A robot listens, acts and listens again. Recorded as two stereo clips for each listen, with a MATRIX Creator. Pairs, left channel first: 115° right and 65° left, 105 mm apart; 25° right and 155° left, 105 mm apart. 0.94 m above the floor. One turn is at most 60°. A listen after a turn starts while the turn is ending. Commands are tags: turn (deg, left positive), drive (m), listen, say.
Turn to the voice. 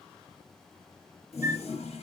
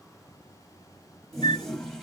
<listen/>
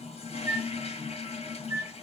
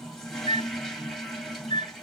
<listen/>
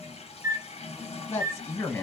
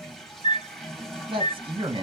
<turn deg="-60"/>
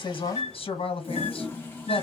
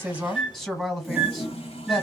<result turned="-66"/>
<turn deg="-60"/>
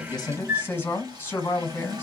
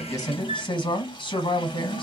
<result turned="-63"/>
<turn deg="-45"/>
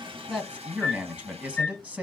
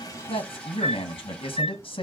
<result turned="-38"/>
<turn deg="-10"/>
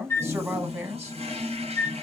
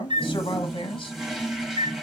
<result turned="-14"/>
<say>Found it: a man speaking, straight ahead, 1 to 2 m away.</say>